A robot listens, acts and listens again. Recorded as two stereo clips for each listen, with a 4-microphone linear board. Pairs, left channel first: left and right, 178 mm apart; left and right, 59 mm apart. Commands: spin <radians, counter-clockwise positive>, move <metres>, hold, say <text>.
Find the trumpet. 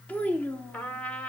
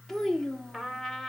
spin 0.52
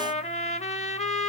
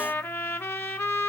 spin 2.44
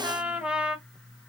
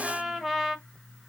say Found it: a trumpet, straight ahead, under 1 m away.